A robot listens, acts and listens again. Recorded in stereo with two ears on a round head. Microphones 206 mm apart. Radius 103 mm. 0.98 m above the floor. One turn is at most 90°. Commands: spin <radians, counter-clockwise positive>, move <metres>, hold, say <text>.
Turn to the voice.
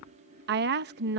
spin -0.79
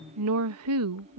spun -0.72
spin -1.57
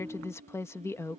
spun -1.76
spin 0.17
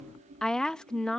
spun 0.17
say Facing the woman speaking.